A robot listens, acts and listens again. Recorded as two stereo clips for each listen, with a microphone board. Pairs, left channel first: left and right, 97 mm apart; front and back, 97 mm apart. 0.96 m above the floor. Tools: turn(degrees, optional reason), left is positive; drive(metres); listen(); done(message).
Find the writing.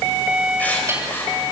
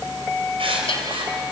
turn(degrees=165, reason="The writing: 165° left.")
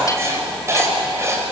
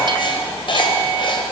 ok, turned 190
turn(degrees=-30, reason="The writing is now 30° right.")
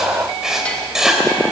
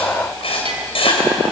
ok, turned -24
done("Facing the writing, 2 to 4 m away.")